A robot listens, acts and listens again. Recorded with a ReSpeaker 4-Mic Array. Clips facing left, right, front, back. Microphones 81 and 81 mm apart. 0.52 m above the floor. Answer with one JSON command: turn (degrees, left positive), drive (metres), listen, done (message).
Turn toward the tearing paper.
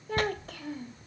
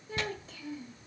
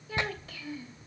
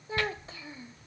{"turn": 65}
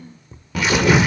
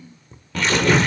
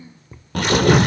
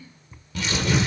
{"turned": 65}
{"turn": 10}
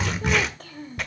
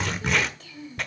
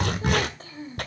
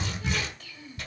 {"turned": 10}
{"done": "Facing the tearing paper."}